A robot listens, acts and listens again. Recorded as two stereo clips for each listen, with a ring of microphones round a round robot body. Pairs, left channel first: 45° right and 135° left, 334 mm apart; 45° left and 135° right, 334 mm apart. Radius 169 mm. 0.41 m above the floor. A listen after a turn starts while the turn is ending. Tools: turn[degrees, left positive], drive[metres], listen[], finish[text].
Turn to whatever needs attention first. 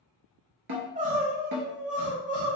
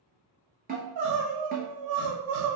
Thought: The crying: 155° right.
Action: turn[-155]
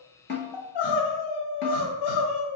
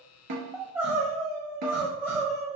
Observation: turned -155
Thought: The crying is now 50° right.
Action: turn[-50]
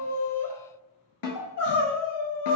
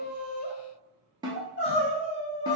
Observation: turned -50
Thought: The crying is now 15° right.
Action: turn[-15]
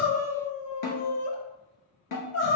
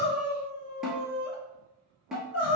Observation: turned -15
Action: finish[Found it: crying, straight ahead.]